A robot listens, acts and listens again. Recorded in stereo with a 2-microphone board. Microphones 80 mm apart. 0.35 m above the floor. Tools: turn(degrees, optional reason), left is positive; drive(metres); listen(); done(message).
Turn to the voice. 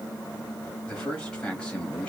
turn(degrees=30)
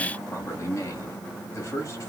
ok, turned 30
turn(degrees=135, reason="So it is at 135° left.")
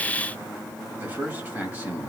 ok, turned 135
turn(degrees=-25, reason="The man speaking is now 25° right.")
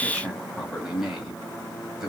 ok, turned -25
done("Facing the man speaking.")